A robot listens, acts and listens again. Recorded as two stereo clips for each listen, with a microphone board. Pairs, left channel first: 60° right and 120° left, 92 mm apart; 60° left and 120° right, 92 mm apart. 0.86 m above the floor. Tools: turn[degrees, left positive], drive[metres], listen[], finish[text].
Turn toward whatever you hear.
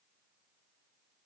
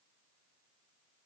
Action: listen[]
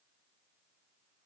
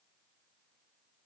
Action: listen[]
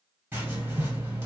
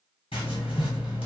Thought: The writing: 55° left.
Action: turn[55]
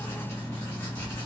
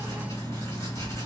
Action: finish[Found it: writing, straight ahead.]